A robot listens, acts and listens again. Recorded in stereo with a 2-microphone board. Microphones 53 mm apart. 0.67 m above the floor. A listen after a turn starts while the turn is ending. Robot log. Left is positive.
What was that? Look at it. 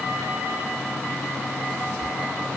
cmd idle
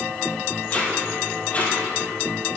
note: The tape being pulled: about 30° left or 150° left.
cmd yaw +30
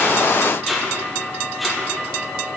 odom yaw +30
end: Facing the tape being pulled.